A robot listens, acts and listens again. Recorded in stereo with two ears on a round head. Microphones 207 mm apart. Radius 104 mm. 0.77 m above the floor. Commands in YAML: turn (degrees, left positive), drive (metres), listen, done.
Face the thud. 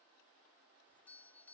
listen: true
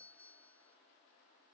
listen: true
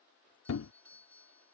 turn: 65
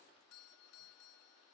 listen: true
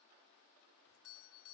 done: "I heard a thud, but can't make it out now. It was about straight ahead or 50° left."